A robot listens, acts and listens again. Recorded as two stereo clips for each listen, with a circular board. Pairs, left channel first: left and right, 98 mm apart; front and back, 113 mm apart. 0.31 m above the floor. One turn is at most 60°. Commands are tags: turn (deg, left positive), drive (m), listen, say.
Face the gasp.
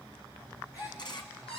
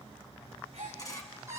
<turn deg="60"/>
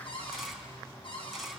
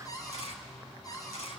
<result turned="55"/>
<turn deg="60"/>
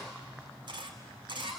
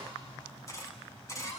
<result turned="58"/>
<turn deg="35"/>
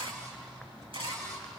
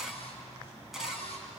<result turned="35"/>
<say>Facing where the gasp came from. I can't hear it now.</say>